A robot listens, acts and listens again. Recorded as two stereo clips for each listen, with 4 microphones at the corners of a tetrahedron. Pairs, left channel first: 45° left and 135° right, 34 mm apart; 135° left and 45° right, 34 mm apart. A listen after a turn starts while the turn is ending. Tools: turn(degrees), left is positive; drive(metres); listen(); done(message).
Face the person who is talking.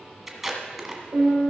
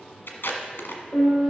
listen()
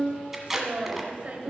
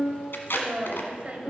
turn(degrees=-90)
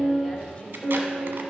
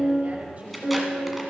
listen()
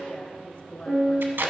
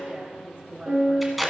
done("Facing the woman speaking.")